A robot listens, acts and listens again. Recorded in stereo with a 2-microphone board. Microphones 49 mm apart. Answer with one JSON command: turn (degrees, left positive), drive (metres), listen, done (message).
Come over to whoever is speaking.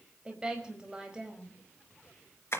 {"turn": -15}
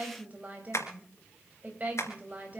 {"turn": -150}
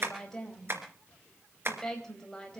{"turn": 10}
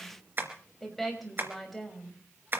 {"drive": 1.0}
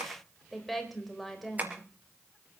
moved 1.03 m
{"drive": 1.0}
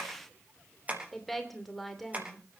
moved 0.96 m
{"drive": 1.0}
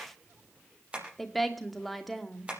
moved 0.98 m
{"drive": 1.0}
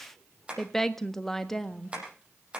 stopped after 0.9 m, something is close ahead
{"turn": 10}
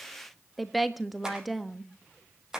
{"done": "I am next to the woman speaking."}